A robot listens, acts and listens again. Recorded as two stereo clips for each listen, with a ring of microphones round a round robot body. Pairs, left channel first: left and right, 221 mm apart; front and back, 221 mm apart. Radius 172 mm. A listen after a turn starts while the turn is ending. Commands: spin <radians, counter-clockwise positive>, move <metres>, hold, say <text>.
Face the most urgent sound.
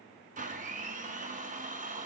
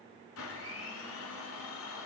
hold
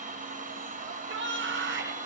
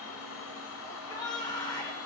spin -1.22
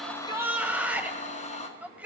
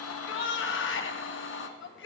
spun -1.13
say Found it: a shout, straight ahead, 1 to 2 m away.